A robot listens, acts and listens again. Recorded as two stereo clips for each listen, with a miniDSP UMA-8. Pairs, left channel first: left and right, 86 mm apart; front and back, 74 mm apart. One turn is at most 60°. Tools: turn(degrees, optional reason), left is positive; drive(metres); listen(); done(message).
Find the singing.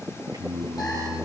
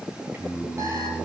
turn(degrees=-60, reason="The singing: 120° right.")
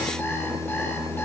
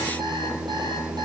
turn(degrees=-60, reason="The singing is now 90° right.")
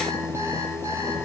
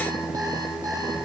turn(degrees=-35, reason="The singing is now 35° right.")
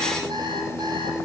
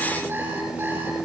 turn(degrees=-10, reason="The singing is now 10° right.")
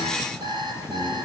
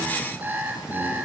listen()
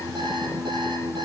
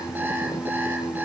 done("Facing the singing, over 4 m away.")